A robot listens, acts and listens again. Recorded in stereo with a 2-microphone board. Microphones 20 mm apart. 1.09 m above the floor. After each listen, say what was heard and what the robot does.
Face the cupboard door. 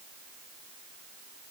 Keep listening.
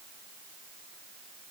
Keep listening.
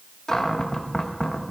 The cupboard door: about 25° left or 155° left. Turn 25° left.
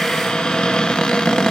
So it is at 130° left. Turn 130° left.
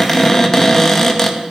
The cupboard door is now 25° left. Turn 25° left.
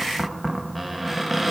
Facing the cupboard door, 1 to 2 m away.